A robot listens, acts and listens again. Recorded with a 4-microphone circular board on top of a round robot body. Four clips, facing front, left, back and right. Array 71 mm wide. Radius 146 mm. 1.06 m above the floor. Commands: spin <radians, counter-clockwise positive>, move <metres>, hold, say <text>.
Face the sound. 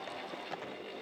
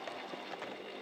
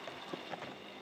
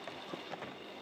hold
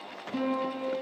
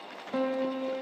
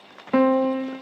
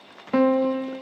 spin -2.71
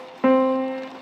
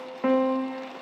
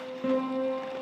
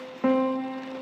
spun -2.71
say Found it: a piano, straight ahead.